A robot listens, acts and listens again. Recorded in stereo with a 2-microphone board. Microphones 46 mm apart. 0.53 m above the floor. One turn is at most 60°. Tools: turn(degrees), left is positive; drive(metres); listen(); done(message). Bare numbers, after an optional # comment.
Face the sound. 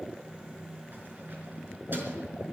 # The keys jangling: about 45° right or 135° right.
turn(-45)
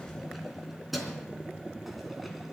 done("Found it: keys jangling, straight ahead.")